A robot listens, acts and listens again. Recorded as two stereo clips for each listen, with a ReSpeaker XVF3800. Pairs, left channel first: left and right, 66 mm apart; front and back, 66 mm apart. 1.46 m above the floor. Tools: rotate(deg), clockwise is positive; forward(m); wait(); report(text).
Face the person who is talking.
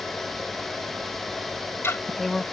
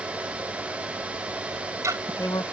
report("Facing the woman speaking.")